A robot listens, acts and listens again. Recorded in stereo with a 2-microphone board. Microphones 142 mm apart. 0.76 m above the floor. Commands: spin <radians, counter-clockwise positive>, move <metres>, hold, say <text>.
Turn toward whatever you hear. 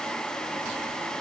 hold
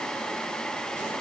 hold
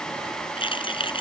spin 0.61
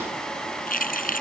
spin 1.83
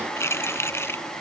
spin 0.26
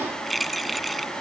say Facing the keys jangling.